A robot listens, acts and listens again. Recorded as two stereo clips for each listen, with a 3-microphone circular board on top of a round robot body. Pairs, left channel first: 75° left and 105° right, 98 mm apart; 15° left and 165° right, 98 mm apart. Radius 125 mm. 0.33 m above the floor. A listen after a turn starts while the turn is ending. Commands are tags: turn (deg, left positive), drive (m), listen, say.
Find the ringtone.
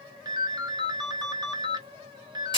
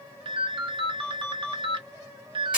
<turn deg="-145"/>
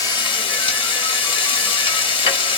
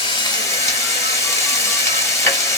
<listen/>
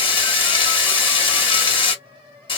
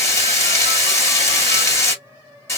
<listen/>
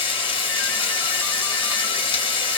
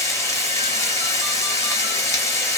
<say>Facing where the ringtone came from. I can't hear it now.</say>